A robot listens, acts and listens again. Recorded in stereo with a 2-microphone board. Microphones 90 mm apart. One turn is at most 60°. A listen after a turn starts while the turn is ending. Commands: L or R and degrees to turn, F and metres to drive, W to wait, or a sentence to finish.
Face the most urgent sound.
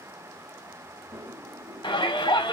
L60
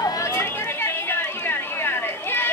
L25
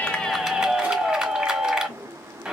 R15
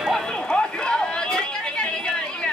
Found it: a shout, straight ahead.